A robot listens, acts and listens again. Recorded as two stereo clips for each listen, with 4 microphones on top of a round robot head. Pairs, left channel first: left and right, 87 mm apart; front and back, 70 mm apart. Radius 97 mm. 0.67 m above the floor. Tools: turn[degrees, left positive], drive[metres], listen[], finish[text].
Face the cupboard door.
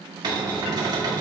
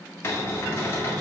Thought: The cupboard door: 55° right.
Action: turn[-55]
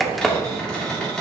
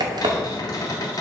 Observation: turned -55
Action: finish[Found it: a cupboard door, straight ahead.]